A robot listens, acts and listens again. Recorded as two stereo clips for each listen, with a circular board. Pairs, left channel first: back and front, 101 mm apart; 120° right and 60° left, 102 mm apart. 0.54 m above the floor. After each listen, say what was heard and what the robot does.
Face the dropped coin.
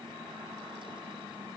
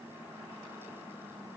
Keep listening.
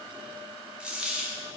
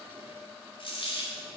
The dropped coin: 80° right. Turn 80° right.
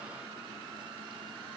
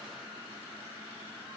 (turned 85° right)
Facing where the dropped coin came from. I can't hear it now.